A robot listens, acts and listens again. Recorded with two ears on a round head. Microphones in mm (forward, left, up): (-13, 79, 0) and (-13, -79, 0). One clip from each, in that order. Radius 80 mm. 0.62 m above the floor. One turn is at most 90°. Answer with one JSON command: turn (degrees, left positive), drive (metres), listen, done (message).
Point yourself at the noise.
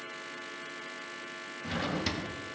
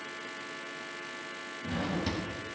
{"turn": 35}
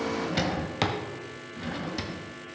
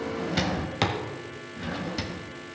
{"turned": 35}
{"done": "Found it: a drawer, straight ahead."}